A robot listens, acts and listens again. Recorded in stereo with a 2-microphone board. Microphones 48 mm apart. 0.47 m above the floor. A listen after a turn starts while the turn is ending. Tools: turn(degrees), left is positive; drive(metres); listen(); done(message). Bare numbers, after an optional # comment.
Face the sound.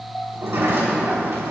# The sliding door: about 60° right or 120° right.
turn(-60)
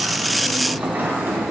# So it is at 45° right.
turn(-45)
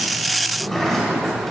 # The sliding door is now 10° left.
turn(10)
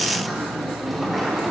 done("Facing the sliding door, 2 to 4 m away.")